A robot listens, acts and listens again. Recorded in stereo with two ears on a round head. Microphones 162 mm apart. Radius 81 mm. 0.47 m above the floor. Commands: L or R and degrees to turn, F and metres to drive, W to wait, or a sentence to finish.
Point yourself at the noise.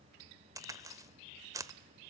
R20
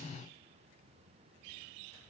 W
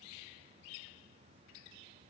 I heard a crack, but can't make it out now. It was about straight ahead or 140° right.